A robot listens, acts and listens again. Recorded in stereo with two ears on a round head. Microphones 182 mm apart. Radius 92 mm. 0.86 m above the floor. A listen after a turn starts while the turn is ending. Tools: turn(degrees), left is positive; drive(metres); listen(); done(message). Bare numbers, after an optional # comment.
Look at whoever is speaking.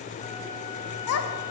turn(90)
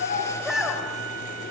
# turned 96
done("Found it: a child speaking, straight ahead, 2 to 4 m away.")